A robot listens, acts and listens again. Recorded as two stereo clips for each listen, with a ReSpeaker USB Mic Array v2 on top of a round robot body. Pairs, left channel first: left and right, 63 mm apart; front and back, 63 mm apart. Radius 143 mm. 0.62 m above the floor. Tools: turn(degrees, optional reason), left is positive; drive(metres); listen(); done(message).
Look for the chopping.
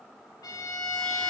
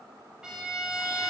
listen()
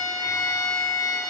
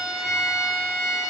listen()
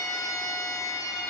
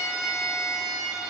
done("I can't make out chopping to turn to.")